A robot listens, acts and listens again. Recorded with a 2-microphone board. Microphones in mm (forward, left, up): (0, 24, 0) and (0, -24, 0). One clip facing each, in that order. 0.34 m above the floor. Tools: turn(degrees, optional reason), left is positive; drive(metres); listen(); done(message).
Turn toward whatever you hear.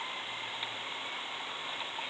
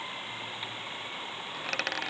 turn(degrees=-90)
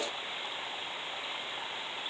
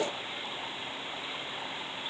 done("Facing where the dropped coin came from. I can't hear it now.")